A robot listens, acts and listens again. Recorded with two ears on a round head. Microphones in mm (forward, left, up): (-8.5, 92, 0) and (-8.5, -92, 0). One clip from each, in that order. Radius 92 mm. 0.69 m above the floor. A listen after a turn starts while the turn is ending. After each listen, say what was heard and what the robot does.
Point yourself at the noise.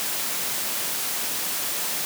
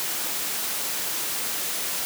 Keep listening.
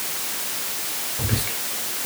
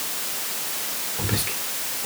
The whispering: about 35° right or 145° right. Turn 35° right.
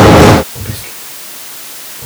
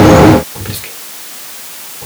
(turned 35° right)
So it is at 110° right. Turn 110° right.
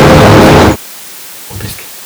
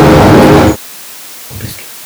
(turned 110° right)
The whispering is now 25° left. Turn 25° left.
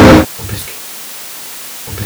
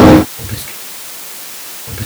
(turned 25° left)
The whispering is now 15° left. Turn 15° left.
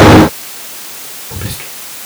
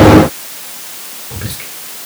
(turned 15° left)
Facing the whispering, 1 to 2 m away.